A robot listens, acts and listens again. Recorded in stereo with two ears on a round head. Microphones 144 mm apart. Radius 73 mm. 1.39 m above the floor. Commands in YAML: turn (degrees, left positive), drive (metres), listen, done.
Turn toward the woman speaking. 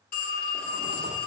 listen: true
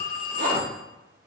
listen: true
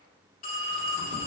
done: "I can't make out a woman speaking to turn to."